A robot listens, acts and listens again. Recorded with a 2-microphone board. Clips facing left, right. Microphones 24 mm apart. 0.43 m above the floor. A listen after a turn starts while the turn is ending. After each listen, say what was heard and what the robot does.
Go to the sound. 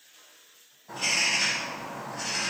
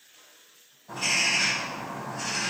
Turn 30° left.
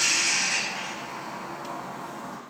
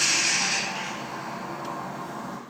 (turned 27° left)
So it is at 25° right. Turn 25° right.
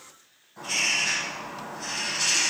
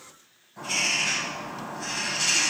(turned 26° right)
Drive 1.0 m forward.
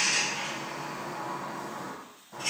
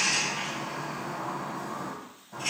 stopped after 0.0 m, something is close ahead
Blocked. The bird is further on, straight ahead.